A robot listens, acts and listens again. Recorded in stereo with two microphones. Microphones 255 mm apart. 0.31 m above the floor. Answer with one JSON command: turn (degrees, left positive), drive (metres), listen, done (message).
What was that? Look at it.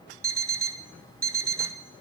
{"turn": -55}
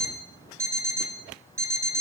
{"turn": -10}
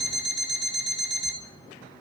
{"done": "Found it: an alarm clock, straight ahead."}